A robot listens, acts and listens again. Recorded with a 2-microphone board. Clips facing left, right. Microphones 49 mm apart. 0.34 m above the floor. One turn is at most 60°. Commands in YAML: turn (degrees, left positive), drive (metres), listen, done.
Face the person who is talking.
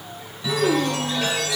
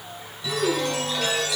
turn: 60
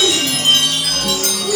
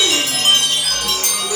done: "Facing the child speaking, 2 to 4 m away."